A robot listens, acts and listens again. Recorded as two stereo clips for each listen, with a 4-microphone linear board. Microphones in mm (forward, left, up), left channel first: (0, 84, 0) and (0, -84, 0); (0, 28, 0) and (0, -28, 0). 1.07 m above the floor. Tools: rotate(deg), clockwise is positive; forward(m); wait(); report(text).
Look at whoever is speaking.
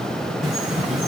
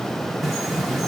wait()
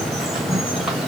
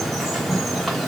wait()
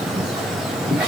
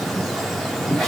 report("I can't make out anyone speaking to turn to.")